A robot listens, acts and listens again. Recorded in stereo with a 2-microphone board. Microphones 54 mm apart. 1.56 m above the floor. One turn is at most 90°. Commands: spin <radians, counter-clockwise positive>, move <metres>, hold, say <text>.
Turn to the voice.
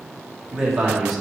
spin -0.52
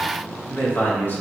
spin 0.79
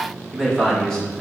spin 0.26
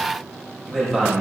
spin 0.17
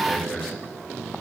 say Found it: a man speaking, straight ahead.